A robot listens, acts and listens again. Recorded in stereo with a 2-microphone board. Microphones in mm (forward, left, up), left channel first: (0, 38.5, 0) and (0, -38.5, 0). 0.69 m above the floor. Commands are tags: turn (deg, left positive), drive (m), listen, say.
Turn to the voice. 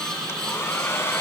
<listen/>
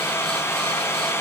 <listen/>
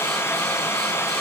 <say>I can't make out anyone speaking, only a hair dryer.</say>